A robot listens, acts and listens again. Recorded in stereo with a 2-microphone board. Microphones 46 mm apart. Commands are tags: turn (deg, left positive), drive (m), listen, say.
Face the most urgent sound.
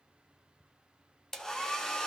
<listen/>
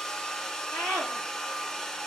<turn deg="60"/>
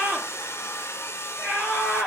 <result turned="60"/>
<say>Found it: a scream, straight ahead, over 4 m away.</say>